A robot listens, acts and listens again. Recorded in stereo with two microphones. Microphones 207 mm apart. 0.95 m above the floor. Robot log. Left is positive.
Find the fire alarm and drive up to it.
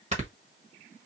cmd idle
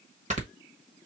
cmd idle
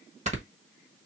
end: I can't make out a fire alarm, only snoring.